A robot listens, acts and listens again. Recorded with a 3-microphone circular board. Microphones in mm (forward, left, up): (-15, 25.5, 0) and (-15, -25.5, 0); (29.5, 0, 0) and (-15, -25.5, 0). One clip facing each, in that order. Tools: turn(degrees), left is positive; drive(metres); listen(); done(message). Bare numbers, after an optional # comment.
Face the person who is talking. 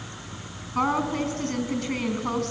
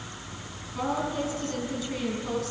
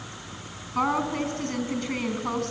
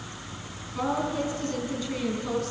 # The woman speaking: 55° left.
turn(55)
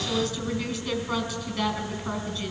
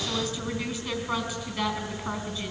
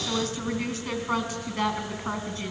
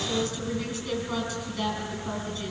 # The woman speaking is now 20° right.
turn(-20)
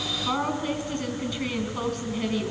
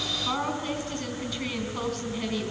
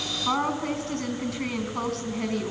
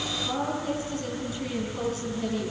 done("Found it: a woman speaking, straight ahead, 2 to 4 m away.")